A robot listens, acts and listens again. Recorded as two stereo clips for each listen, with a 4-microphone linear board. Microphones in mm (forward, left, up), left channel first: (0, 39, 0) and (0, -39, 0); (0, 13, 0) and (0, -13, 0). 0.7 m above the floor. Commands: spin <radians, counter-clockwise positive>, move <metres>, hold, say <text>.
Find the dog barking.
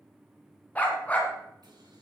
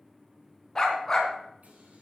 spin 0.35
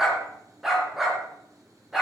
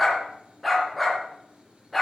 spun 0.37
say Found it: a dog barking, straight ahead.